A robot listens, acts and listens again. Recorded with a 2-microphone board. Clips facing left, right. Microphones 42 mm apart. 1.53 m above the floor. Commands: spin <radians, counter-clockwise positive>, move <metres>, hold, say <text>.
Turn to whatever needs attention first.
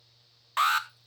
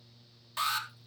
spin 0.79
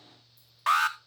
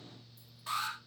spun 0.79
spin 1.57
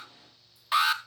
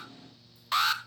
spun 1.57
spin 0.17
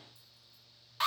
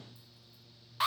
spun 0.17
say Facing the alarm, under 1 m away.